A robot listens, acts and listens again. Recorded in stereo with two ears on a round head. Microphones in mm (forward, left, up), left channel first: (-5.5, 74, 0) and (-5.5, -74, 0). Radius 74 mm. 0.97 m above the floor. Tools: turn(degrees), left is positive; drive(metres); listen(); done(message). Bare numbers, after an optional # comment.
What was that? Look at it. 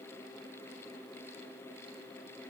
listen()
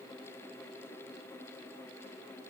listen()
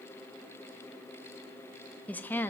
turn(30)
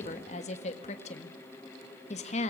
# So it is at 135° left.
turn(135)
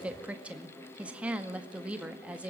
# The woman speaking is now 10° right.
turn(-10)
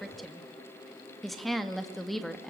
done("Facing the woman speaking.")